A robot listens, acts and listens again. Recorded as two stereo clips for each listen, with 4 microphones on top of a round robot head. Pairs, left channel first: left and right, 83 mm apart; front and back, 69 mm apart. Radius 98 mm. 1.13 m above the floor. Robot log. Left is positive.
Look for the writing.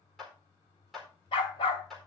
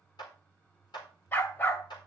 cmd idle
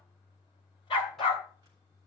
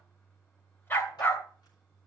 cmd idle
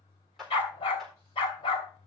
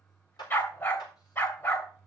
end: I can't make out writing, only a dog barking and a clap.